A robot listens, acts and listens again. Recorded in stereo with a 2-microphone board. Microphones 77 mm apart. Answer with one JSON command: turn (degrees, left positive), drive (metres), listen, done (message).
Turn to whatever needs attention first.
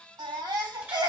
{"turn": -65}
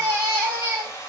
{"turn": -35}
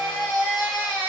{"done": "Facing the baby crying, 2 to 4 m away."}